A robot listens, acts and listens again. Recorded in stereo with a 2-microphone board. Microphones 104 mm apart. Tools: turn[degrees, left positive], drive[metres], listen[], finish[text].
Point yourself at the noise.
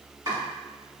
Thought: The chopping: about 40° right or 140° right.
Action: turn[-40]
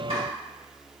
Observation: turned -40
Action: listen[]
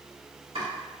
Thought: So it is at 95° right.
Action: turn[-95]
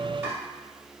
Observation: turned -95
Action: listen[]
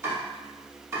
Thought: The chopping is now 30° right.
Action: turn[-30]
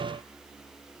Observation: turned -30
Action: listen[]
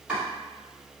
Thought: The chopping is now 10° right.
Action: turn[-10]
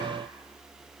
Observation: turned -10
Action: listen[]
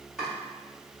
Action: finish[Facing the chopping.]